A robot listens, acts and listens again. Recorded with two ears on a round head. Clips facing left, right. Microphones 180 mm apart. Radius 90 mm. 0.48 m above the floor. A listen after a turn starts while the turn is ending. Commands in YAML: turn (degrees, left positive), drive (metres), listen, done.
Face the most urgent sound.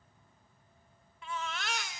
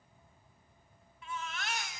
turn: 60
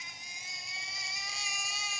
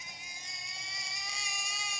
done: "Found it: a baby crying, straight ahead, under 1 m away."